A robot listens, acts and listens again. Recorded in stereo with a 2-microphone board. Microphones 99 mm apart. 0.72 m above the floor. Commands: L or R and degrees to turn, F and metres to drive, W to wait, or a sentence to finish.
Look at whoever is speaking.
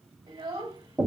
R65
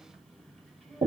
W
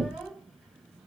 W
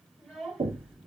Found it: a child speaking, straight ahead.